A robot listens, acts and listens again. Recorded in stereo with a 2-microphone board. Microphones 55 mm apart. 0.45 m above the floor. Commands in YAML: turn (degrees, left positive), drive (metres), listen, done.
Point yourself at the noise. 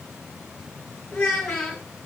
turn: 30
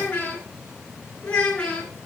turn: 160
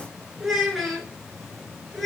done: "Facing the child speaking."